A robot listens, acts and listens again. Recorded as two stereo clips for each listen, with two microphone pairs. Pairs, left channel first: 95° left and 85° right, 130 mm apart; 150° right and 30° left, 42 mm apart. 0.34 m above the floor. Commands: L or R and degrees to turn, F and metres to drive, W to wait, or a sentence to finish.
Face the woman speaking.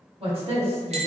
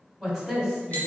R60
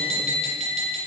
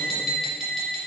W
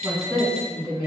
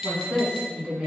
R20
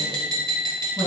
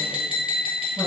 W
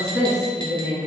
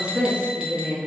Facing the woman speaking, 2 to 4 m away.